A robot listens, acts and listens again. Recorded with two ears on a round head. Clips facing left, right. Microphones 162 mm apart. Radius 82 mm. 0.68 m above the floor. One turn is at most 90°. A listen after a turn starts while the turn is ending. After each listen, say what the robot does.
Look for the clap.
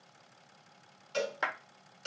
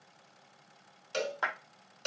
Turn 25° left.
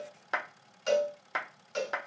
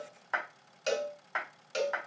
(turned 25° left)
Turn 90° left.
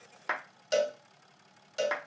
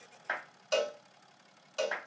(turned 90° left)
Turn 70° left.
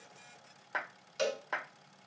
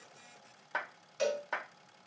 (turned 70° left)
Facing the clap, 1 to 2 m away.